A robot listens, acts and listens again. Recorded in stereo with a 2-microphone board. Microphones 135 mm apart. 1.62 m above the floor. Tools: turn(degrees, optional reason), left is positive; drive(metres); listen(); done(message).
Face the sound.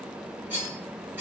turn(degrees=-30)
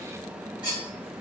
turn(degrees=-135, reason="So it is at 135° right.")
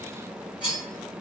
turn(degrees=-10, reason="The cutlery clinking is now 10° right.")
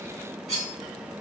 done("Found it: cutlery clinking, straight ahead, 1 to 2 m away.")